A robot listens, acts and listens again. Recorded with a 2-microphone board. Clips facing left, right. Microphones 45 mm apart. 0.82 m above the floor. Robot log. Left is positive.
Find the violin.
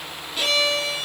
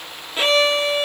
note: The violin: about 30° right or 150° right.
cmd yaw -30
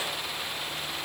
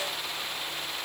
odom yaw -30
cmd idle
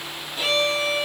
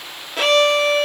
note: So it is at 120° right.
cmd yaw -120
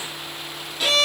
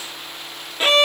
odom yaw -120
note: The violin is now 35° right.
cmd yaw -35
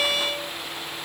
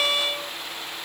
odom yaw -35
note: The violin is now 10° right.
cmd yaw -10
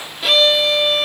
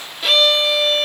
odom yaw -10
end: Facing the violin, under 1 m away.